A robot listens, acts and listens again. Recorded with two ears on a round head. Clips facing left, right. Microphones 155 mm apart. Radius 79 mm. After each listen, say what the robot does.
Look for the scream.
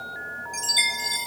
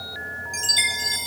Keep listening.
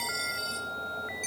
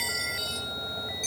Keep listening.
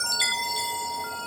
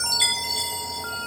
I can't make out a scream, only a chime.